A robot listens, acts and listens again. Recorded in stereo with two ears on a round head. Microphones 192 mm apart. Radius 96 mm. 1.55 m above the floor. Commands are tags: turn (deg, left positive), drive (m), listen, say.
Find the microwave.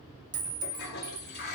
<listen/>
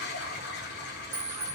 <listen/>
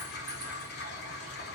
<say>I can't make out a microwave, only a toilet flushing and a clink.</say>